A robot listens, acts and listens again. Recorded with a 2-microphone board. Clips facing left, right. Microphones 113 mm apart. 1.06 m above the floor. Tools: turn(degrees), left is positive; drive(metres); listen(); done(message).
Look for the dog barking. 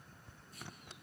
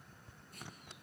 listen()
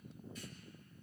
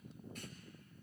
listen()
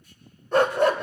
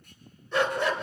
turn(degrees=50)
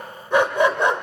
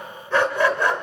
turn(degrees=20)
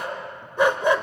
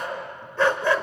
turn(degrees=20)
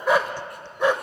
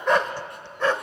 turn(degrees=15)
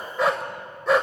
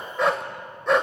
done("Found it: a dog barking, straight ahead.")